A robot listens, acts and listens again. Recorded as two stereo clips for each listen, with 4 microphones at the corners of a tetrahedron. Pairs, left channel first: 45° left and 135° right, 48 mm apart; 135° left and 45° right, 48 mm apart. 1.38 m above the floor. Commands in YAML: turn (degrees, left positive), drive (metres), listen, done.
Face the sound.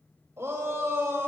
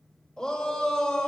turn: -150
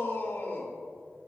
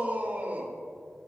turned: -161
turn: 10
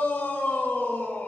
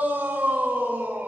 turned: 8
done: "Found it: a shout, straight ahead, 2 to 4 m away."